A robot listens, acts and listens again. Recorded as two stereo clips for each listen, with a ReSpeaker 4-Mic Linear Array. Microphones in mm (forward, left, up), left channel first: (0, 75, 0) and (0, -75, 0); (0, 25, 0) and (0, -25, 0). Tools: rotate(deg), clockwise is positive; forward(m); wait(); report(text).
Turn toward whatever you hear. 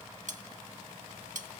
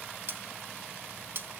rotate(55)
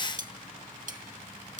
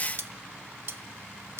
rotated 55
rotate(65)
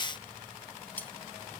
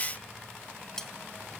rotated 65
rotate(-10)
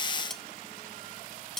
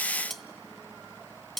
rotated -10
report("Found it: cutlery clinking, straight ahead, under 1 m away.")